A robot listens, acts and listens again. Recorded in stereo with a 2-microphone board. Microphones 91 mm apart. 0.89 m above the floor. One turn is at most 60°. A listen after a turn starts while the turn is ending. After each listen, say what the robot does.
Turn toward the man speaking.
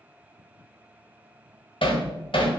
Keep listening.
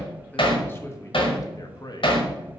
Turn 50° left.
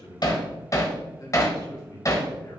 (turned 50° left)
Turn 45° left.
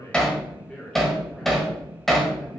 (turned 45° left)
Turn 10° left.
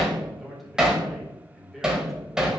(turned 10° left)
Facing the man speaking, 2 to 4 m away.